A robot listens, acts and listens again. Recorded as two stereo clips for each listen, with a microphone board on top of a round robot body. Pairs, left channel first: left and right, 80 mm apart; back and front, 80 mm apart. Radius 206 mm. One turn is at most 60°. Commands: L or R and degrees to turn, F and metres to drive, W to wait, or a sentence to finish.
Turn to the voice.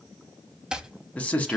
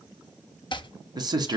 L20
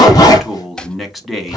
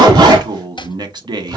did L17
Found it: a man speaking, straight ahead, 1 to 2 m away.